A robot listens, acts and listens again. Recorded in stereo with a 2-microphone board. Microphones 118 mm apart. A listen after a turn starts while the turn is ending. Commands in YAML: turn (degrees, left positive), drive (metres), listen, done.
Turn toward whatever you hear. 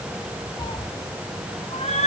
turn: 65
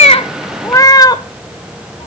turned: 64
turn: 35
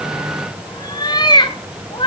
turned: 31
turn: 45
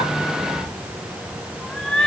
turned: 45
done: "Facing the cat meowing."